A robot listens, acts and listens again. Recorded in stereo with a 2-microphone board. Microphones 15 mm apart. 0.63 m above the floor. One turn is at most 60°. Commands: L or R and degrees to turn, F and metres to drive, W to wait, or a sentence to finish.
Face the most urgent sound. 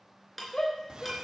L30
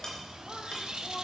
W
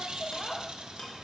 L10
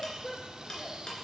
Facing the shout.